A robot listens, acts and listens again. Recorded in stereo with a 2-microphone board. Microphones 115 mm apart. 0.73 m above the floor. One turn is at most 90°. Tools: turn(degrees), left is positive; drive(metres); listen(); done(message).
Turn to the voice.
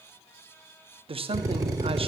turn(degrees=-50)
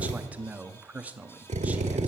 turn(degrees=-15)
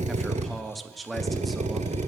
done("Facing the man speaking, under 1 m away.")